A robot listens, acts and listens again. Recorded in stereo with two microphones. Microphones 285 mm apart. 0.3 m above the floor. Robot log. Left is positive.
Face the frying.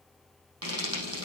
note: The frying: about 55° right or 125° right.
cmd yaw -55
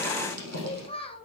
note: So it is at 65° right.
cmd yaw -65
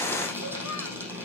note: The frying is now 10° right.
cmd yaw -10
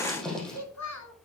end: Found it: frying, straight ahead.